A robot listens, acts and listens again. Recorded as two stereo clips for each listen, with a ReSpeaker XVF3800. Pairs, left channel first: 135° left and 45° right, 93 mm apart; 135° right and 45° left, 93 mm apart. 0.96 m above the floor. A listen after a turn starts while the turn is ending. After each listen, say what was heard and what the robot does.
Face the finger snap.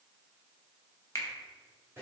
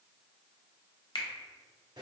The finger snap: 170° right. Turn 170° right.
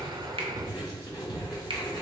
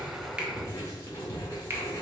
Keep listening.
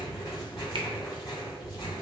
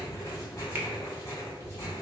Keep listening.
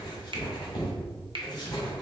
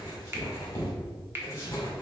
The finger snap is now 20° right. Turn 20° right.
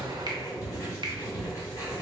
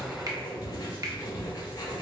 Keep listening.
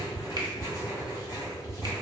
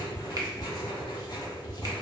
Keep listening.
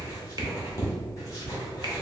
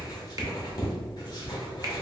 I heard a finger snap from this way, but can't make it out now.